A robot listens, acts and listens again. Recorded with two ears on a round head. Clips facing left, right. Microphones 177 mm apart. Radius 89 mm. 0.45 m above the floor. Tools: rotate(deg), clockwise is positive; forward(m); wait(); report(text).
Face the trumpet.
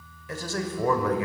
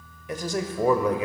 wait()
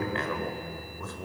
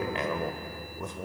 wait()
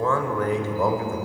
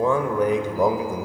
report("I can't make out a trumpet, only a man speaking.")